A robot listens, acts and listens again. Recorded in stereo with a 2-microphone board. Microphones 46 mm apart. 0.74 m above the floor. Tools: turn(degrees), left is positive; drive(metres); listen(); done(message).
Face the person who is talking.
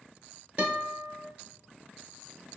listen()
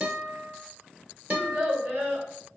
turn(degrees=-45)
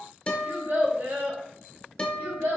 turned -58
turn(degrees=-75)
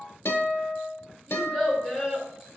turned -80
done("Facing the child speaking, 1 to 2 m away.")